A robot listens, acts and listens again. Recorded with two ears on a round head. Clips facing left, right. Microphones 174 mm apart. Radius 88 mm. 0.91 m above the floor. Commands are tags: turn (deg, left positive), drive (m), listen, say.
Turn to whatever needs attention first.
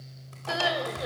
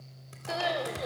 <turn deg="30"/>
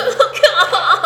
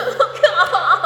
<turn deg="140"/>
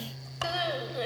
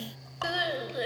<turn deg="-15"/>
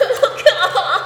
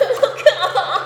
<say>Found it: crying, straight ahead.</say>